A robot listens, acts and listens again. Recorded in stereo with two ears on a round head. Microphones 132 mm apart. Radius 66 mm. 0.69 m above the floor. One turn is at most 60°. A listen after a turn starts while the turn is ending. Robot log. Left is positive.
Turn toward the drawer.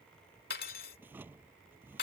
cmd yaw -30
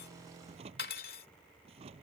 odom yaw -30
note: So it is at 135° right.
cmd yaw -60
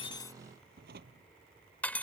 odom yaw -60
note: The drawer is now 70° right.
cmd yaw -60
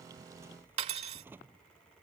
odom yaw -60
note: The drawer is now 15° right.
cmd yaw -15
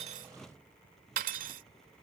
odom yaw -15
end: Found it: a drawer, straight ahead.